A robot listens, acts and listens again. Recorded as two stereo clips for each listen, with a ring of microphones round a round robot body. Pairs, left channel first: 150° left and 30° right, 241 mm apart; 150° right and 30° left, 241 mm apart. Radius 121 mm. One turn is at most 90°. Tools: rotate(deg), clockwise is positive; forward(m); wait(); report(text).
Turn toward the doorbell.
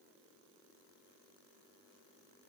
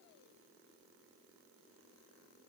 wait()
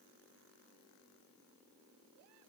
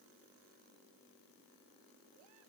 wait()
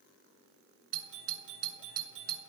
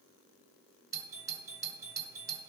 rotate(45)
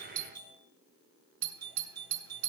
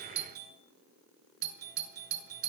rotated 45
rotate(15)
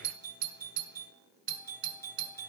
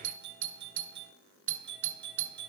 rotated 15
report("Found it: a doorbell, straight ahead.")